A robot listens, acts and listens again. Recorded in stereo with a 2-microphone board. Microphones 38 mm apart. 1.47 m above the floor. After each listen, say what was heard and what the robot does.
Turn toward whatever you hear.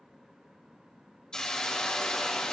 The hiss: about 20° left or 160° left. Turn 20° left.
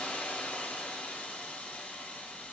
So it is at 140° left. Turn 140° left.
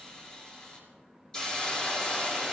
The hiss is now 20° left. Turn 20° left.
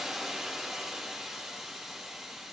Found it: a hiss, straight ahead.